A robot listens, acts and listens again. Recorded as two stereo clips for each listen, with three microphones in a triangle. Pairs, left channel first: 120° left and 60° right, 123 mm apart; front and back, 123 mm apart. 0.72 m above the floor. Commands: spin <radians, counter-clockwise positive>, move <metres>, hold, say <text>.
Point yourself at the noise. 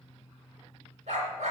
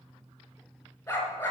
spin -1.31
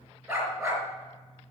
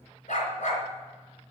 say Facing the dog barking.